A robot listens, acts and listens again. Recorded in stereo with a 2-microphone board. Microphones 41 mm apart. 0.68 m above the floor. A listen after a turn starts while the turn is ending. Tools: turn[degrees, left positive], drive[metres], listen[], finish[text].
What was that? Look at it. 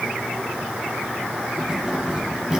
Thought: The keys jangling: about 20° right or 160° right.
Action: turn[-20]
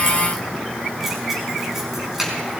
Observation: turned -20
Action: turn[-30]
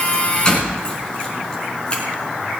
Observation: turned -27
Thought: So it is at 20° left.
Action: turn[20]
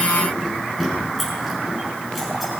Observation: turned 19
Action: finish[Found it: keys jangling, straight ahead, over 4 m away.]